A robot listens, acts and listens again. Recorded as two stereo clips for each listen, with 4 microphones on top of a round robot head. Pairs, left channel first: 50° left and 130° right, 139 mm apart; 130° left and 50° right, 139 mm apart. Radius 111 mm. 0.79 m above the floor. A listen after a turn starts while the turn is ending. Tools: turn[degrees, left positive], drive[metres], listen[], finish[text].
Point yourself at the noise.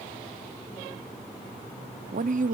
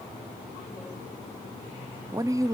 Thought: The woman speaking: 115° right.
Action: turn[-115]
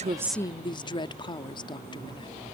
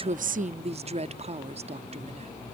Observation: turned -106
Thought: The woman speaking is now 10° right.
Action: turn[-10]
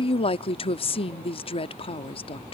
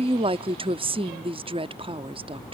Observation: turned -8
Action: finish[Found it: a woman speaking, straight ahead.]